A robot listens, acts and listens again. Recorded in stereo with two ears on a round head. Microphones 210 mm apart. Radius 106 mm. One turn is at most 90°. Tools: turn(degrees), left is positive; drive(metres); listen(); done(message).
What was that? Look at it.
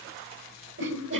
turn(degrees=-55)
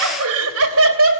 turn(degrees=-60)
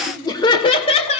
turn(degrees=30)
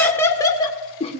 turn(degrees=25)
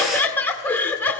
turn(degrees=10)
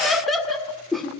done("Facing the laughter, 1 to 2 m away.")